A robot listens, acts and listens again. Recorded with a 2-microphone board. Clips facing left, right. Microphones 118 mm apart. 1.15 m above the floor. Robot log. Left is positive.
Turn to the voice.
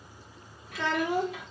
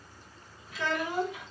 note: The child speaking: about 70° left or 110° left.
cmd yaw +70
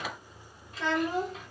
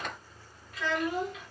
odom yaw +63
note: So it is at 35° left.
cmd yaw +35
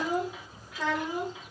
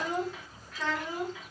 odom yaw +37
note: The child speaking is now 25° left.
cmd yaw +25
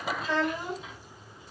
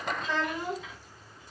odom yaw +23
note: The child speaking is now 10° left.
cmd yaw +10
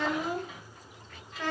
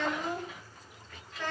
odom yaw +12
end: Found it: a child speaking, straight ahead, 1 to 2 m away.